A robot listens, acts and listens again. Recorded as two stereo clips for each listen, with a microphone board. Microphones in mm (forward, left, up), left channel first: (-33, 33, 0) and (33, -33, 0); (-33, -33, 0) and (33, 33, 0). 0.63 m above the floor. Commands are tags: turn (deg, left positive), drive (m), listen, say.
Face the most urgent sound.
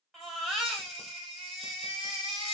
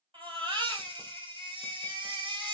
<turn deg="45"/>
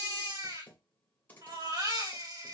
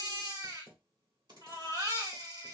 <say>Facing the baby crying.</say>